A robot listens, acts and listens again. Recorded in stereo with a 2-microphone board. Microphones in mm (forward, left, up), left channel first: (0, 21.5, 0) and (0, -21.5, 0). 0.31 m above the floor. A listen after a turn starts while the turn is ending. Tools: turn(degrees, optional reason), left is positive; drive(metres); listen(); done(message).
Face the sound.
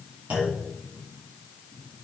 turn(degrees=-35, reason="The clunk: about 35° right or 145° right.")
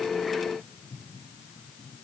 listen()
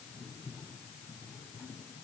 done("I heard a clunk, but can't make it out now. It was about straight ahead or 110° right.")